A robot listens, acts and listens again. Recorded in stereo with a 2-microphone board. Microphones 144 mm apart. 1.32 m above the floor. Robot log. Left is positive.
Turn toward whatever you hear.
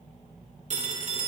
note: The phone ringing: about 55° right or 125° right.
cmd yaw -55
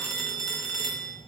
end: Found it: a phone ringing, straight ahead, 2 to 4 m away.